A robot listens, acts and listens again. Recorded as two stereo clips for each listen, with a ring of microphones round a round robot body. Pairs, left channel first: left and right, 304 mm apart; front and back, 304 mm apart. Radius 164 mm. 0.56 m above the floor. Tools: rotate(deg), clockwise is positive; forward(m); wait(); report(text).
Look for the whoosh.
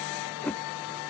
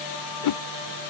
report("Found it: a whoosh, straight ahead.")